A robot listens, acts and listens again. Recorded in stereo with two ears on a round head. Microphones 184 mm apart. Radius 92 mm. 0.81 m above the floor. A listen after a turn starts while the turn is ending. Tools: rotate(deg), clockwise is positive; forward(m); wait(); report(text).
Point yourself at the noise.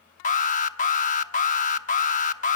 rotate(-40)
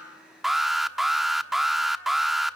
report("Facing the alarm, 1 to 2 m away.")